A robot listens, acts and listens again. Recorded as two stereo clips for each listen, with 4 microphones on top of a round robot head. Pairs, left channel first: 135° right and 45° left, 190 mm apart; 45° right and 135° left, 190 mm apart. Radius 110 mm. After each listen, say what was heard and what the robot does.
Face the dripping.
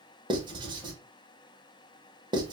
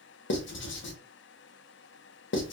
Keep listening.
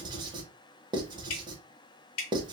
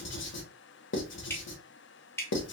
The dripping: 125° right. Turn 125° right.
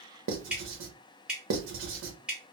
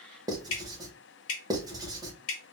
The dripping is now 40° right. Turn 40° right.
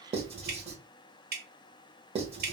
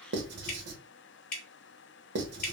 Facing the dripping, under 1 m away.